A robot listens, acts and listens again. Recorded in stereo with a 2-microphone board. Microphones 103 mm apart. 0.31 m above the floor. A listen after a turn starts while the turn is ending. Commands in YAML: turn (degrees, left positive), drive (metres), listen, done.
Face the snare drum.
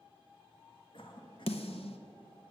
turn: 90
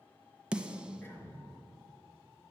turn: -10
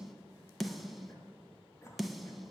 done: "Found it: a snare drum, straight ahead, under 1 m away."